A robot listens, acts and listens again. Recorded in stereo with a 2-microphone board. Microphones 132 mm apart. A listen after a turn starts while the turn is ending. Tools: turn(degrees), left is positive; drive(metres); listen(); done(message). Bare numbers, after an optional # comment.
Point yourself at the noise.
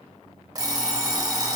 # The alarm clock: about 30° right or 150° right.
turn(-30)
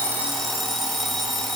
done("Found it: an alarm clock, straight ahead, 1 to 2 m away.")